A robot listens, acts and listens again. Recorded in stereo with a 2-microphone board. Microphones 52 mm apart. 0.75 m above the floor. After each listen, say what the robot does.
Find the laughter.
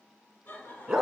Turn 40° left.
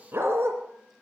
Keep listening.
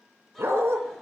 Keep listening.
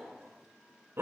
Found it: laughter, straight ahead.